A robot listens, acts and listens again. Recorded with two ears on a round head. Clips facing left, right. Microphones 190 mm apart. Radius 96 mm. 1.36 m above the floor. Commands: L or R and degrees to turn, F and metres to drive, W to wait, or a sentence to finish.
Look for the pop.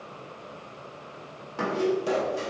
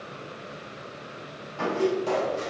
L20
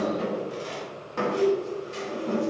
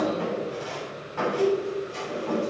W
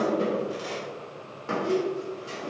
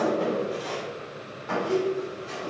I heard a pop, but can't make it out now. It was about straight ahead or 140° left.